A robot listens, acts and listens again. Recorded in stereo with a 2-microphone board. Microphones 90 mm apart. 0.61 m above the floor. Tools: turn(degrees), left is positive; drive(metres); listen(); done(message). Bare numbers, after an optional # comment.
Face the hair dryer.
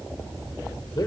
listen()
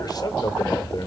listen()
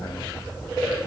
done("I can't make out a hair dryer to turn to.")